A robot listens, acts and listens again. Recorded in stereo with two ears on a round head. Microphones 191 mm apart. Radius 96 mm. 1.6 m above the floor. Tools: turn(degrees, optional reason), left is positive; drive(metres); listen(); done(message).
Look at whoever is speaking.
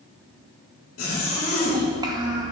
turn(degrees=-20, reason="The child speaking: about 20° right or 160° right.")
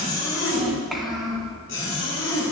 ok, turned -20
done("Found it: a child speaking, straight ahead, 1 to 2 m away.")